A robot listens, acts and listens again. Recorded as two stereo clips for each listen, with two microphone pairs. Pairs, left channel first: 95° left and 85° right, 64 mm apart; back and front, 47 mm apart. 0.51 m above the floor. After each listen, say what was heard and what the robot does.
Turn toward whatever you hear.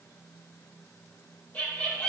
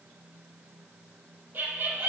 The laughter: 35° left. Turn 35° left.
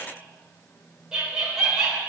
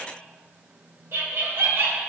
Found it: laughter, straight ahead, 1 to 2 m away.